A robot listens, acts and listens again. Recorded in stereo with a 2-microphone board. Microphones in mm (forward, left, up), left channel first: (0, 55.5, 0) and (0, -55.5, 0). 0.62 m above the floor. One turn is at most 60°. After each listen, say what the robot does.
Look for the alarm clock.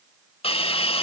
Keep listening.
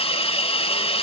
Keep listening.
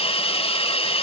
I can't make out an alarm clock to turn to.